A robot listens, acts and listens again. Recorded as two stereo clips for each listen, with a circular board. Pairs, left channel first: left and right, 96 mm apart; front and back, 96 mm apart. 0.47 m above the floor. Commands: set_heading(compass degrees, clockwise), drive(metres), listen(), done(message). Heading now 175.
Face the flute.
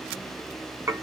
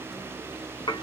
listen()
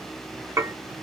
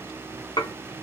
listen()
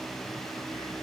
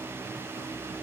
done("I can't make out a flute, only dishes clattering.")